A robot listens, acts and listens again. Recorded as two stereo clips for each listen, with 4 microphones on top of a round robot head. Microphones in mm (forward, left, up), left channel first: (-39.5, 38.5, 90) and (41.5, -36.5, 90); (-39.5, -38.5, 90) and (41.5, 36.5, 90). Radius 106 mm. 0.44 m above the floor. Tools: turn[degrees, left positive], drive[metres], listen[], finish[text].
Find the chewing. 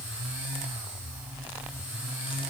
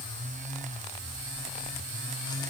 Action: listen[]
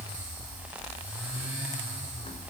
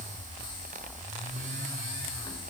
Action: listen[]
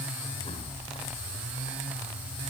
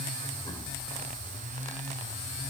Action: finish[I can't make out chewing.]